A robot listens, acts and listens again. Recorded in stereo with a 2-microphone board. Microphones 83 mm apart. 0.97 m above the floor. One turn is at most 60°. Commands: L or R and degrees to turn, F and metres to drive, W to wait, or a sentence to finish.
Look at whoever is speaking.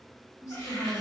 L45
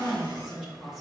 Facing the woman speaking, 1 to 2 m away.